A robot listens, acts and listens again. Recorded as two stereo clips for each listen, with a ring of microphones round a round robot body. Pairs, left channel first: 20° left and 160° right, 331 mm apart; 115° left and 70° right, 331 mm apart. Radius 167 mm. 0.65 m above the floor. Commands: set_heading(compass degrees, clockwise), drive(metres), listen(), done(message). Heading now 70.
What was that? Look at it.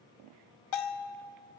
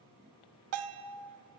set_heading(90)
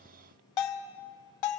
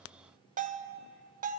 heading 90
done("Found it: a bell, straight ahead.")